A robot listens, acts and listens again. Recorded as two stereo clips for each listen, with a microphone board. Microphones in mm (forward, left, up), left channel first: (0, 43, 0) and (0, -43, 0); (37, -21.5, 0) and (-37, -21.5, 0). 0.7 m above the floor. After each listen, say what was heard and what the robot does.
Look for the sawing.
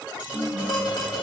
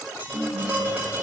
Keep listening.
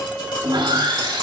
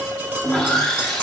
The sawing: 80° right. Turn 80° right.
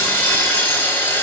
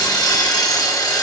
The sawing is now 30° left. Turn 30° left.
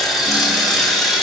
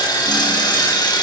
Found it: sawing, straight ahead, under 1 m away.